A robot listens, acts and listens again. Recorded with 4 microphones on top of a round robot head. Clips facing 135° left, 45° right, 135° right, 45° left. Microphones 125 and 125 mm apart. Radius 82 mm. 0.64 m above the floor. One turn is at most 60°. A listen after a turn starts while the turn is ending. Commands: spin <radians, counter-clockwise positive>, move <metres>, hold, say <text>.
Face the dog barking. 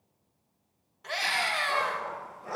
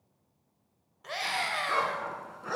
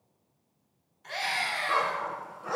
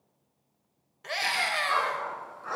spin -1.05
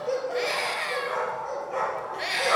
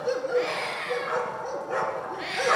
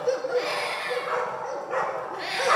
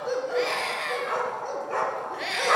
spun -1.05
spin -0.26
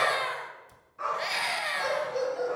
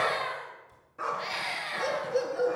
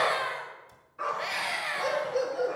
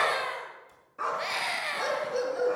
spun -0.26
say Found it: a dog barking, straight ahead, 2 to 4 m away.